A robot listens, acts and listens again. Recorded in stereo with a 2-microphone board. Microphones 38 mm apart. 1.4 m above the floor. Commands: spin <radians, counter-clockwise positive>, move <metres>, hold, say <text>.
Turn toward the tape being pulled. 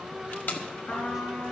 spin 1.05
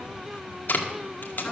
spin 1.05
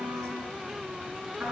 hold
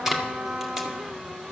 spin -0.17
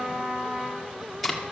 say Facing the tape being pulled.